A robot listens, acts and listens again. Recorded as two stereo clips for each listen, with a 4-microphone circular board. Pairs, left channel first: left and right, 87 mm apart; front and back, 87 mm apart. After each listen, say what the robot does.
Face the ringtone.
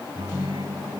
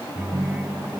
Turn 165° right.
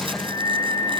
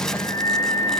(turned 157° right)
Keep listening.
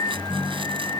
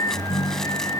Found it: a ringtone, straight ahead.